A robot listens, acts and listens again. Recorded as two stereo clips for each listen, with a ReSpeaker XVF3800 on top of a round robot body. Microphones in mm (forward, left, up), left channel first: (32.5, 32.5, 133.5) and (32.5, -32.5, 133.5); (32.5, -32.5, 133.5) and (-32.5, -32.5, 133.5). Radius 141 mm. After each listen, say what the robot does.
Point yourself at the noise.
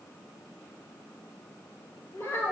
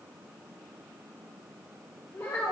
Turn 40° left.
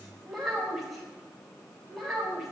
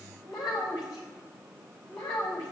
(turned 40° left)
Facing the child speaking.